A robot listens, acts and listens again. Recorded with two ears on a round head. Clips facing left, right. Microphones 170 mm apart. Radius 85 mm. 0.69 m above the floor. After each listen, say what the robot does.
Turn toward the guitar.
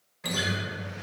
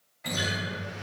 Turn 90° left.
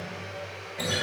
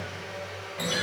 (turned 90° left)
Found it: a guitar, straight ahead.